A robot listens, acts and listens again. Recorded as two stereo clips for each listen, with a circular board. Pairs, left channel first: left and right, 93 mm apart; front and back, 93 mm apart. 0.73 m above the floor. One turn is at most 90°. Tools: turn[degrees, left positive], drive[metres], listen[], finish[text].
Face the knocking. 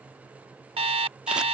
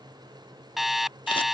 Action: listen[]
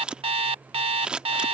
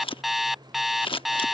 Action: listen[]
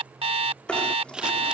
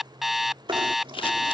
Thought: The knocking: 170° left.
Action: turn[90]
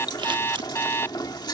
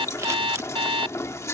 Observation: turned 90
Thought: The knocking is now 55° left.
Action: turn[55]
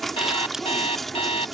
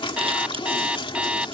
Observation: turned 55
Action: finish[Facing the knocking.]